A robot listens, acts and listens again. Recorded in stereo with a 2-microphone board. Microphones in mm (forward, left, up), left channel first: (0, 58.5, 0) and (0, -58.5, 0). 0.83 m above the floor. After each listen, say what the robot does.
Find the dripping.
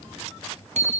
Keep listening.
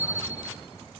Keep listening.
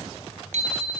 I can't make out dripping, only a bicycle bell.